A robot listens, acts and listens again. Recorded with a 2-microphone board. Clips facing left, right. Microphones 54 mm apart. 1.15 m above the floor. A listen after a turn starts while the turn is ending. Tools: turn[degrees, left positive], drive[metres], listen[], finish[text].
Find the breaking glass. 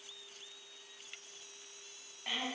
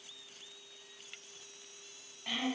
Action: listen[]
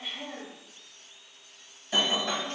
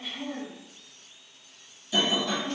Thought: The breaking glass: about 40° left or 140° left.
Action: turn[40]
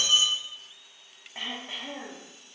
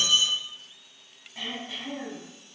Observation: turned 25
Action: listen[]
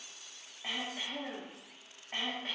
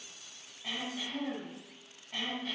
Action: finish[I heard breaking glass, but can't make it out now. It was about 15° left or 115° left.]